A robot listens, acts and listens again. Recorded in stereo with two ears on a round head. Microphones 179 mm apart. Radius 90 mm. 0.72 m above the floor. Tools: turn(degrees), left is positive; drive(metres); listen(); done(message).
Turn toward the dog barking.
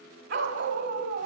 turn(degrees=-60)
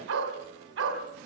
turn(degrees=-65)
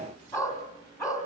turn(degrees=15)
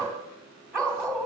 done("Found it: a dog barking, straight ahead, 2 to 4 m away.")